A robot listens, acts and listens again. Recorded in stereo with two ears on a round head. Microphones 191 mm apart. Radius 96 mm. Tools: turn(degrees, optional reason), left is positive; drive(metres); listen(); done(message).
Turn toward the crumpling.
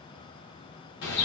listen()
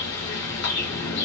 listen()
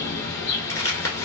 turn(degrees=15, reason="The crumpling: about 15° left or 165° left.")
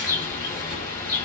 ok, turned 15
listen()
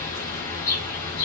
listen()
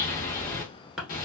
done("Facing the crumpling, 1 to 2 m away.")